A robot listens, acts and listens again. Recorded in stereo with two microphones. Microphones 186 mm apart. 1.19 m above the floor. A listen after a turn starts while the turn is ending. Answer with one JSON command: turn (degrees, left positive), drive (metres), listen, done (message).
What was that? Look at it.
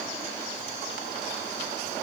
{"listen": true}
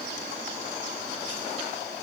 {"listen": true}
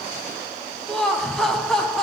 {"turn": 30}
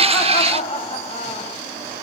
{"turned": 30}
{"turn": 145}
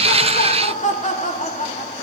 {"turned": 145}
{"turn": 40}
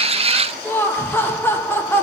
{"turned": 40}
{"turn": 10}
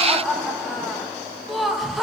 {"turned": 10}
{"done": "Facing the laughter."}